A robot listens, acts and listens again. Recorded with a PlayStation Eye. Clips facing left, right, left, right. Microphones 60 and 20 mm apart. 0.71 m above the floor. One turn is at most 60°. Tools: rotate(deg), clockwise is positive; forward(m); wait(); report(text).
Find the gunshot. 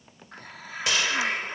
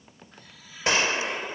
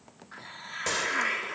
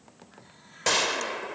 rotate(35)
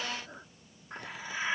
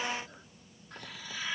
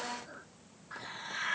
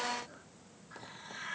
wait()
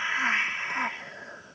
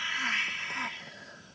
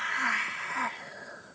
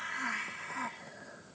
report("I heard a gunshot, but can't make it out now. It was about straight ahead or 110° right.")